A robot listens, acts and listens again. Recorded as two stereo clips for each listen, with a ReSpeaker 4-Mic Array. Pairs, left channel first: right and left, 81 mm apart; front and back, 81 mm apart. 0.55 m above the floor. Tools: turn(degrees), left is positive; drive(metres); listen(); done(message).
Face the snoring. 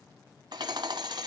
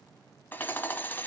listen()
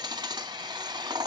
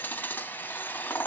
listen()
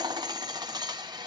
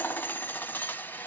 done("I can't make out snoring to turn to.")